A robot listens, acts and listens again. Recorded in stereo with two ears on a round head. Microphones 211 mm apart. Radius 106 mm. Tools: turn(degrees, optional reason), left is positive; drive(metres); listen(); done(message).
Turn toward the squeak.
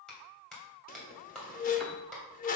turn(degrees=35, reason="The squeak: about 35° left or 145° left.")
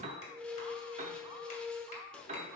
done("Found it: a squeak, straight ahead.")